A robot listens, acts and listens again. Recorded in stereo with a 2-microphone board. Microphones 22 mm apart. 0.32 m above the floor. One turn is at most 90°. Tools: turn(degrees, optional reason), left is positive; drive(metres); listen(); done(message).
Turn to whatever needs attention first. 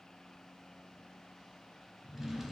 listen()
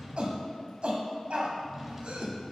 turn(degrees=-55, reason="The shout: about 55° right or 125° right.")
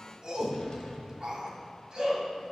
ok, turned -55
turn(degrees=-40, reason="So it is at 40° right.")
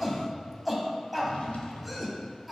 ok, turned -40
done("Found it: a shout, straight ahead, 1 to 2 m away.")